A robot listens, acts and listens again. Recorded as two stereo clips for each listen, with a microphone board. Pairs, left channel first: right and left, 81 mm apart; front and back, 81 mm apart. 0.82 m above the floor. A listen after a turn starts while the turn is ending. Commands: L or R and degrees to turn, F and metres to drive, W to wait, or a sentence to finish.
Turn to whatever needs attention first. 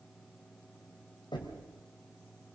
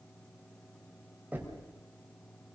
W
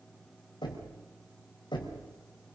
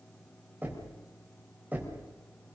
W
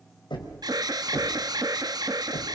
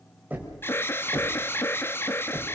L60
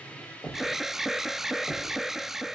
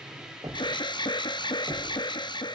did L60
Facing the alarm, under 1 m away.